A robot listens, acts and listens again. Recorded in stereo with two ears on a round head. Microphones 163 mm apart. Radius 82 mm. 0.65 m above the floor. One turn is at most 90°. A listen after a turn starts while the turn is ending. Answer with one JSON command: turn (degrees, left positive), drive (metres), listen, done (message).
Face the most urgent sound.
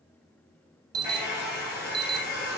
{"turn": -25}
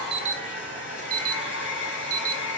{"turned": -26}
{"turn": -90}
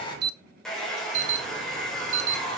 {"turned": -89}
{"turn": -40}
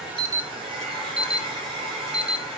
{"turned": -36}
{"done": "Found it: an alarm, straight ahead, under 1 m away."}